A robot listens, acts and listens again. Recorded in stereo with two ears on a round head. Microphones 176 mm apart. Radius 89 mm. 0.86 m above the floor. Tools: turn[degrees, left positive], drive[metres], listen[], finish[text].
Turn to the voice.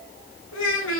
Action: turn[90]
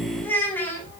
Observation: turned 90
Thought: So it is at 10° left.
Action: turn[10]
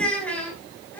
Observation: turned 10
Thought: The child speaking is now 10° left.
Action: turn[10]
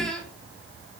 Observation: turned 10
Action: finish[Found it: a child speaking, straight ahead, over 4 m away.]